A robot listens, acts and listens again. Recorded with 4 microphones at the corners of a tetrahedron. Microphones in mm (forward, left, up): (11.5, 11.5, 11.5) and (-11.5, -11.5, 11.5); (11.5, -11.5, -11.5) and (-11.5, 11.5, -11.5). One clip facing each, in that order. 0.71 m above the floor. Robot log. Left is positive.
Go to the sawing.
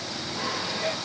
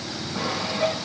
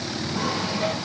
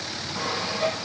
note: The sawing: 145° right.
cmd yaw -145
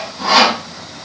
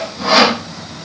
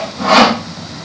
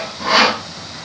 note: The sawing is now 55° right.
cmd yaw -55
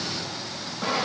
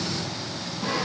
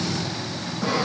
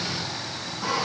note: The sawing is now 25° left.
cmd yaw +25
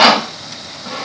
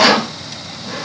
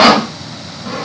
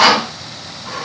cmd fwd 1.0
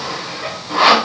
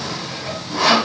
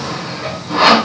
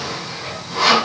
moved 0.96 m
cmd fwd 1.0
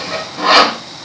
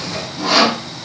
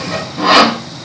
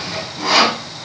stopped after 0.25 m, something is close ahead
end: Arrived at the sawing, straight ahead.